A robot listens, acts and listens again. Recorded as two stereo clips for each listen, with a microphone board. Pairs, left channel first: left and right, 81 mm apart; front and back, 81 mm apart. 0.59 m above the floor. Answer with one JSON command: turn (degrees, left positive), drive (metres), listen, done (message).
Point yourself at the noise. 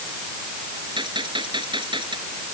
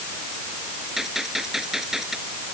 {"turn": -95}
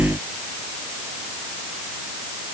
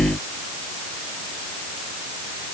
{"done": "I heard a gunshot from this way, but can't make it out now."}